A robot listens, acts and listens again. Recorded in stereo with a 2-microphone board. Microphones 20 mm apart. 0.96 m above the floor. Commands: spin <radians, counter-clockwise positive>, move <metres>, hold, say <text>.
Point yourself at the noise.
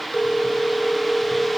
spin 0.79
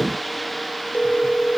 spin 1.57
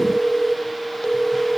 spin 0.52
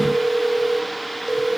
say Facing the phone ringing, 2 to 4 m away.